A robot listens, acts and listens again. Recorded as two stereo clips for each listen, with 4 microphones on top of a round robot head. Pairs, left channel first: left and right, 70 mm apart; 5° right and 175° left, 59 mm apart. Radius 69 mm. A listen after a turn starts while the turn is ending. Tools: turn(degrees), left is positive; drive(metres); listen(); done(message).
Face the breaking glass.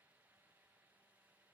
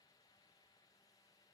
listen()
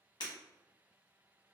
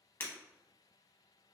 turn(degrees=55)
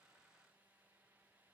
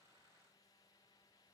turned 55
done("Facing where the breaking glass came from. I can't hear it now.")